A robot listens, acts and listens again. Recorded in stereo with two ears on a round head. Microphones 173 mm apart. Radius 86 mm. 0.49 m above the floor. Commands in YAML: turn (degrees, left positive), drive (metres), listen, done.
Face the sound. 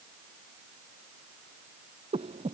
turn: -30
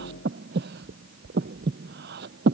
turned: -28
turn: -120
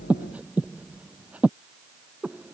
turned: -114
done: "Facing the breathing."